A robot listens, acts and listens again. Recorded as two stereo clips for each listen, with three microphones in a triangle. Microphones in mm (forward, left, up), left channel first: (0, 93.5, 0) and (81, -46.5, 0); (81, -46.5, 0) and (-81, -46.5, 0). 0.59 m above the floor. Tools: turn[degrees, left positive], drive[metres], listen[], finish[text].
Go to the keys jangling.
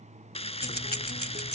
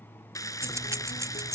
Thought: The keys jangling: 110° left.
Action: turn[110]
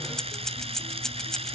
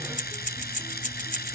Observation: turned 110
Thought: The keys jangling is now 35° left.
Action: turn[35]
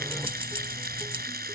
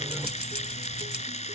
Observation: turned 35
Action: drive[1.0]
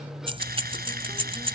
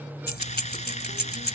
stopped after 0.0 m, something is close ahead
Action: finish[Blocked. The keys jangling is further on, straight ahead.]